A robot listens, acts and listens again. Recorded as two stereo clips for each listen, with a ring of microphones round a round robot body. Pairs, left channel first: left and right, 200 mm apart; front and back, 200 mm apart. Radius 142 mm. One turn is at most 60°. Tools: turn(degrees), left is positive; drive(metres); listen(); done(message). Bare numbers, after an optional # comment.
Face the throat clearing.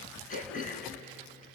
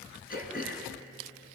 # The throat clearing: 40° left.
turn(40)
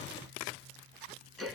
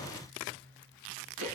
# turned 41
done("Facing the throat clearing, 2 to 4 m away.")